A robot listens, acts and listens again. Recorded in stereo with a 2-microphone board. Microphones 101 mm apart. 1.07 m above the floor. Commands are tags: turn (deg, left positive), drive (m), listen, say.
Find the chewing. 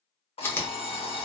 <turn deg="20"/>
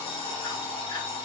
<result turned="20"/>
<listen/>
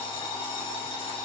<listen/>
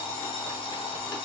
<say>I heard chewing, but can't make it out now. It was about straight ahead or 140° left.</say>